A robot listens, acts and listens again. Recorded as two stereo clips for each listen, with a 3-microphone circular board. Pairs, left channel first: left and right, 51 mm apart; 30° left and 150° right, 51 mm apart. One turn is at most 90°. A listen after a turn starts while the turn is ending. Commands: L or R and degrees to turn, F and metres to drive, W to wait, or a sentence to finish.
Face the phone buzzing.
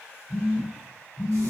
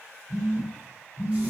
R90
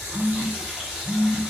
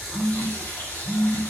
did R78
R65
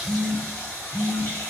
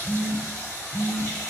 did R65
Facing the phone buzzing.